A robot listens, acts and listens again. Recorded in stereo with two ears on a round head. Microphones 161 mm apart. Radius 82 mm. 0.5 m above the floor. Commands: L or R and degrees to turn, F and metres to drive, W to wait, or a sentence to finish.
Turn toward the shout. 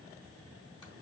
W
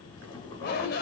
L60
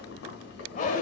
L50
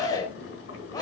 L25
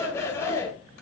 L15
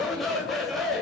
Found it: a shout, straight ahead, 2 to 4 m away.